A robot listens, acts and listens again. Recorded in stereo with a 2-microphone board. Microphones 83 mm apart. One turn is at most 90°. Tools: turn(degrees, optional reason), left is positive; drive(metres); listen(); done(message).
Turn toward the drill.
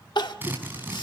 turn(degrees=-25, reason="The drill: about 25° right or 155° right.")
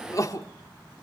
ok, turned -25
listen()
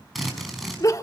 done("Facing the drill, over 4 m away.")